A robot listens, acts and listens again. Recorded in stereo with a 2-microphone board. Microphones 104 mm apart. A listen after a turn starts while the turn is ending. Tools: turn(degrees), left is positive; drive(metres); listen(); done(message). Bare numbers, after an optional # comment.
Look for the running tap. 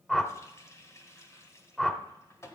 # The running tap: about 25° left or 155° left.
turn(25)
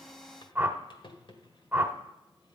# So it is at 130° left.
turn(130)
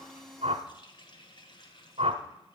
# The running tap is now 50° left.
turn(50)
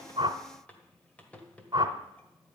# The running tap is now 15° left.
turn(15)
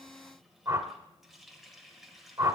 done("Facing the running tap.")